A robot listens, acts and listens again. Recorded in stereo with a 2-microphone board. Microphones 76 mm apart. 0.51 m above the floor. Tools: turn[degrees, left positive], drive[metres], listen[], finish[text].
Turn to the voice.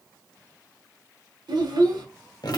Thought: The child speaking: about 65° right or 115° right.
Action: turn[-65]
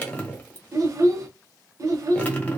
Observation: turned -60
Thought: So it is at 50° right.
Action: turn[-50]
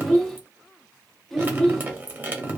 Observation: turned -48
Action: finish[Found it: a child speaking, straight ahead, under 1 m away.]